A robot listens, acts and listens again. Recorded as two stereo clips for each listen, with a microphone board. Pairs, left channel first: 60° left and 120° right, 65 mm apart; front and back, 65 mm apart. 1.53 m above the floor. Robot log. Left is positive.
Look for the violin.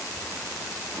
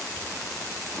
cmd idle
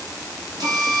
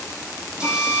note: The violin: 110° left.
cmd yaw +110
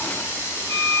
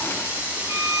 note: The violin is now 30° right.
cmd yaw -30
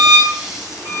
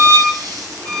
note: The violin is now 10° left.
cmd yaw +10
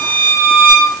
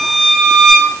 end: Found it: a violin, straight ahead.